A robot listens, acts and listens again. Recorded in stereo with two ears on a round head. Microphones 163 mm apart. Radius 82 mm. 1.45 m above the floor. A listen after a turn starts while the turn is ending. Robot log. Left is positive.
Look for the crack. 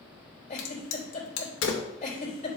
note: The crack: about 75° left or 105° left.
cmd yaw +75
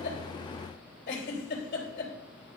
cmd idle
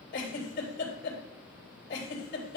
end: I heard a crack, but can't make it out now. It was about straight ahead or 30° left.